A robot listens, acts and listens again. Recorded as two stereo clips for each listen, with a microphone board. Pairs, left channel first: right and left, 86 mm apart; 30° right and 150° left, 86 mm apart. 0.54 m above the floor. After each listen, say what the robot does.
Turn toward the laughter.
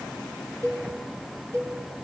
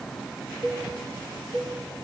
Keep listening.
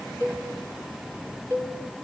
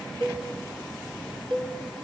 Keep listening.
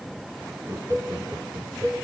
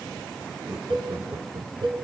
Turn 140° left.
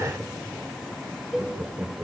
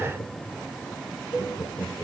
Turn 20° left.
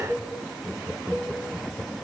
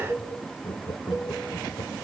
Found it: laughter, straight ahead.